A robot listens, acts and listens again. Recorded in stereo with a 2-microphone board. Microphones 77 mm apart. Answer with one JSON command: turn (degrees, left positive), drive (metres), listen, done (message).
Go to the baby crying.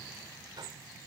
{"listen": true}
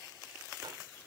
{"listen": true}
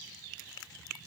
{"done": "I can't make out a baby crying to turn to."}